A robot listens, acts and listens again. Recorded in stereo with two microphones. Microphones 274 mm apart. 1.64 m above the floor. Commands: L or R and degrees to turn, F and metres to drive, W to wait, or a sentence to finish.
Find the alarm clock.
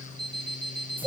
L20
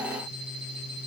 W
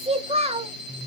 W
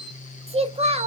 L140
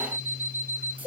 R10
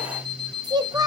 Found it: an alarm clock, straight ahead.